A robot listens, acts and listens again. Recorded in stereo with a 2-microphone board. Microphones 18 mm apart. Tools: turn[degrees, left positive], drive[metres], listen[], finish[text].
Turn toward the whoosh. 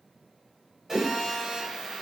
Thought: The whoosh: about 60° right or 120° right.
Action: turn[-60]
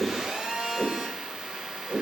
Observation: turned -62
Thought: So it is at 55° right.
Action: turn[-55]
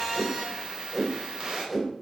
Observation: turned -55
Action: finish[Found it: a whoosh, straight ahead, 2 to 4 m away.]